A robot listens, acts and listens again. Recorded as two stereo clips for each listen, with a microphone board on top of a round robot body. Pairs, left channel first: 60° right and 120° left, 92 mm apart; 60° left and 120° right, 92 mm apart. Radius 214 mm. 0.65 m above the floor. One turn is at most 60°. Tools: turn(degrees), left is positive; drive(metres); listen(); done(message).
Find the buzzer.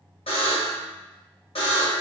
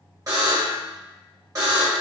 turn(degrees=-60)
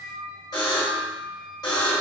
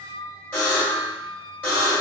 turn(degrees=-15)
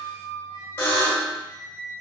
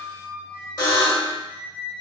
done("Found it: a buzzer, straight ahead.")